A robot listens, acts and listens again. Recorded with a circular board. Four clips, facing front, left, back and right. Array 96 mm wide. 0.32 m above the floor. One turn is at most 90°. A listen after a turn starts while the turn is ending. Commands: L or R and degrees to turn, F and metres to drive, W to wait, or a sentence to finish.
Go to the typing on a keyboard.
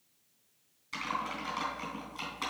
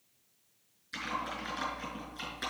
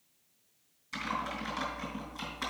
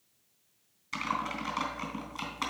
R80
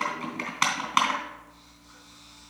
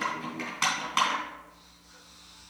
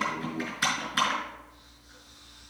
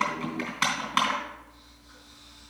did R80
F1.0
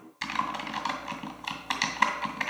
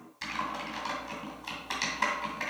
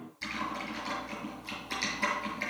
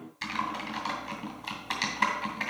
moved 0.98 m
F1.0
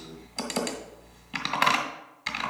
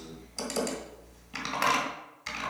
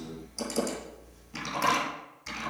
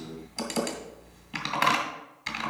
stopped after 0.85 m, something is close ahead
R10
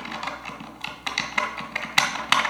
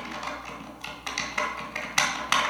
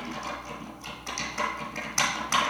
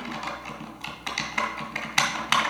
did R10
Arrived at the typing on a keyboard, straight ahead.